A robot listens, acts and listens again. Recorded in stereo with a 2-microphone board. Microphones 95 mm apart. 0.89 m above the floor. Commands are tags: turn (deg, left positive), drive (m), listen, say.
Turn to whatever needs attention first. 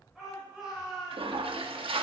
<turn deg="-30"/>
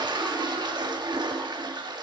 <listen/>
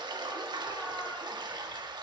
<listen/>
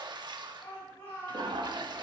<turn deg="25"/>
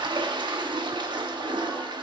<listen/>
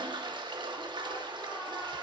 <listen/>
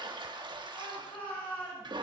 <turn deg="20"/>
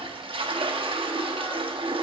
<listen/>
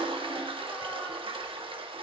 <listen/>
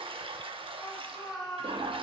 <say>Found it: a shout, straight ahead.</say>